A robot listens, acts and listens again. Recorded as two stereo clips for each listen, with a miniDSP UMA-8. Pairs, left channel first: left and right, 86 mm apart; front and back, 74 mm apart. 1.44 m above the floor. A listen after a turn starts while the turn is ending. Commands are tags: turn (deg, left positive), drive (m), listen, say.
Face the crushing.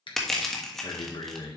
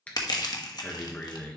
<say>Facing the crushing.</say>